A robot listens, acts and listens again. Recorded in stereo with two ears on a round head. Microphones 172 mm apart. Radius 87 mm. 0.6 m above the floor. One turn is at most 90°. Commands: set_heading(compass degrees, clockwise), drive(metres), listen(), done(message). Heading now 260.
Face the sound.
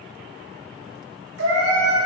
set_heading(350)
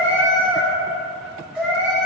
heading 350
done("Facing the cat meowing.")